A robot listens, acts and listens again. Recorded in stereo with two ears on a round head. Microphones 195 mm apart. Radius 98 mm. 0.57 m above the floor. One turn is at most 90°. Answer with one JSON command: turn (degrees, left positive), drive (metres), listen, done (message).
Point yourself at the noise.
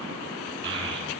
{"turn": -55}
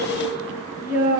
{"turn": -10}
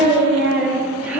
{"turn": -10}
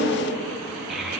{"done": "Found it: a child speaking, straight ahead."}